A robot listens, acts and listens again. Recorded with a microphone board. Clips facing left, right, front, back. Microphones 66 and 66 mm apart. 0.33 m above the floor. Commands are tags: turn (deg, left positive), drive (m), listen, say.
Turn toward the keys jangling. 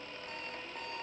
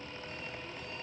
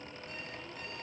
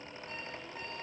<listen/>
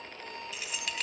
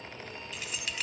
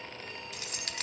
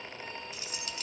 <say>Found it: keys jangling, straight ahead, 1 to 2 m away.</say>